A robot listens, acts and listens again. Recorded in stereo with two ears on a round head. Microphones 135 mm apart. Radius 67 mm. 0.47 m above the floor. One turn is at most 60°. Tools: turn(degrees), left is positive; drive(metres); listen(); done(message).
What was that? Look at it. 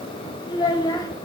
turn(degrees=25)
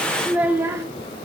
turn(degrees=-20)
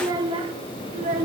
turn(degrees=-55)
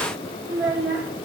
turn(degrees=-25)
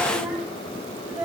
turn(degrees=-10)
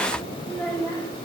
done("Found it: a child speaking, straight ahead.")